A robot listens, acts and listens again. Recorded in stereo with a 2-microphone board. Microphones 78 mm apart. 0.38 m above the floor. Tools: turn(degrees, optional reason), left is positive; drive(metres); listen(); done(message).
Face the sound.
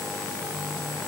listen()
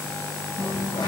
turn(degrees=90)
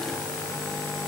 done("Facing where the dropped coin came from. I can't hear it now.")